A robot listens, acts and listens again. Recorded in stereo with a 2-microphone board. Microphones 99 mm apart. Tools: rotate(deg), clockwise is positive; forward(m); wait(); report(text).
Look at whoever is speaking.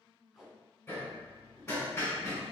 wait()
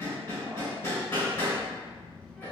rotate(-30)
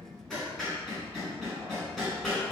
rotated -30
rotate(-140)
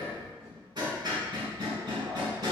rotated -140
rotate(-15)
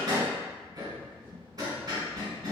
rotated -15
report("Found it: a child speaking, straight ahead, 1 to 2 m away.")